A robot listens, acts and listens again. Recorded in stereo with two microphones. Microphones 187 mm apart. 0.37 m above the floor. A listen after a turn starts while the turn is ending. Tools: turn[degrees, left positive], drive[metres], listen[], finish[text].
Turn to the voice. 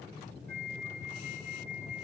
Action: listen[]
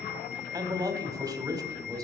Thought: The man speaking: about 20° right or 160° right.
Action: turn[-20]
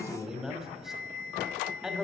Action: finish[Facing the man speaking, 1 to 2 m away.]